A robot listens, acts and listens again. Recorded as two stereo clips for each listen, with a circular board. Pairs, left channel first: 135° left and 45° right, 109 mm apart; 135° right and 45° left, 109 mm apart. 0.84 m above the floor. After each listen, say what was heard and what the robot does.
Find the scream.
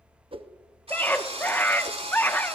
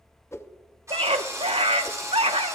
The scream: 65° left. Turn 65° left.
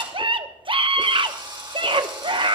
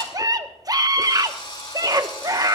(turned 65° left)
The scream is now 10° right. Turn 10° right.
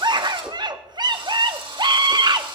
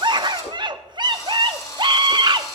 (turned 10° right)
Facing the scream.